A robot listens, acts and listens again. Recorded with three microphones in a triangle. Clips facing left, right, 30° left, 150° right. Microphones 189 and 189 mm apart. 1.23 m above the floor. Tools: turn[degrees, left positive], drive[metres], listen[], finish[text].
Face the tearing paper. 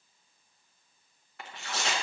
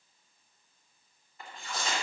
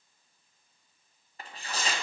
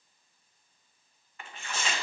Thought: The tearing paper: 80° left.
Action: turn[80]
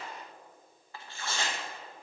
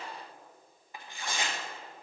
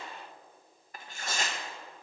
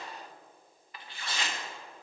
Thought: The tearing paper is now 15° right.
Action: turn[-15]
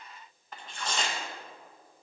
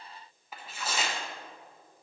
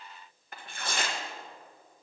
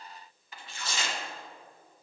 Action: finish[Found it: tearing paper, straight ahead, under 1 m away.]